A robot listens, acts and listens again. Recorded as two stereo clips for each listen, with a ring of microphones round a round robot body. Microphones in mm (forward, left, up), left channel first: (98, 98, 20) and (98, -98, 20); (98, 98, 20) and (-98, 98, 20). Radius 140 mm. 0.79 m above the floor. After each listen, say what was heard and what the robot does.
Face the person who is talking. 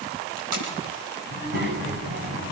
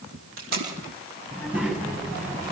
The child speaking: 65° right. Turn 65° right.
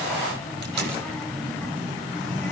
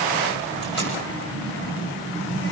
Found it: a child speaking, straight ahead.